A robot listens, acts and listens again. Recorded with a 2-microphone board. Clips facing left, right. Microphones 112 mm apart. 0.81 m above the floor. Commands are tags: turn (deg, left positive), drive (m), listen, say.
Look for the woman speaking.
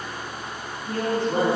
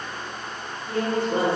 <turn deg="-15"/>
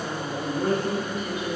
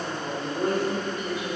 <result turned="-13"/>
<turn deg="-150"/>
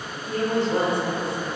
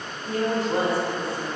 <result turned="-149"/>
<say>Facing the woman speaking.</say>